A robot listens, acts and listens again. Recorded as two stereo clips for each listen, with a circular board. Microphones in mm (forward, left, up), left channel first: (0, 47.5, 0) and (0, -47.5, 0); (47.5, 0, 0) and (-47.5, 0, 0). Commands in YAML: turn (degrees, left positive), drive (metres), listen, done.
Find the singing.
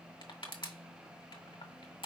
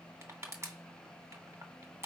listen: true
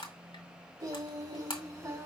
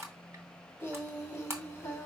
turn: -50
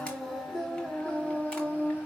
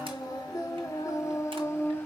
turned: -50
turn: 40
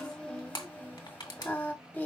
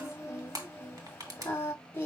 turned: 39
turn: 35
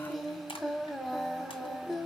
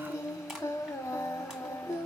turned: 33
done: "Facing the singing, 1 to 2 m away."